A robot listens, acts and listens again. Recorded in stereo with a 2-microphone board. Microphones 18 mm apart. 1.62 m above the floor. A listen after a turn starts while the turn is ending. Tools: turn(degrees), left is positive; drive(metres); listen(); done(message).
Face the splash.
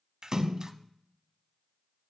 turn(degrees=-30)
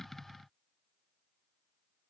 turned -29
listen()
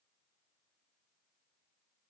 done("I heard a splash, but can't make it out now. It was about 5° right or 120° right.")